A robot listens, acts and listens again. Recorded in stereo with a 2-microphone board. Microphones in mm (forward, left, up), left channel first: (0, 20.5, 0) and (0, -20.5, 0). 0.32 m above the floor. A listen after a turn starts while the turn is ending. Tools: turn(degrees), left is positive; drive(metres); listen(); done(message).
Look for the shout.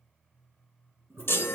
listen()
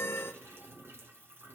listen()
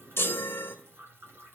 done("I can't make out a shout to turn to.")